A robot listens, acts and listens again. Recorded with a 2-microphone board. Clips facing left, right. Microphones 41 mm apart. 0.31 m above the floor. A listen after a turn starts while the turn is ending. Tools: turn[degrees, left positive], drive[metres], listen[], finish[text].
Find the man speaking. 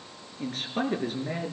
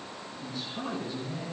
Thought: The man speaking: about 70° left or 110° left.
Action: turn[70]
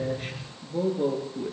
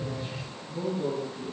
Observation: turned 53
Thought: So it is at 60° left.
Action: turn[60]
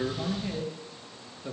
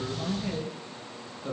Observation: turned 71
Action: finish[Facing the man speaking, over 4 m away.]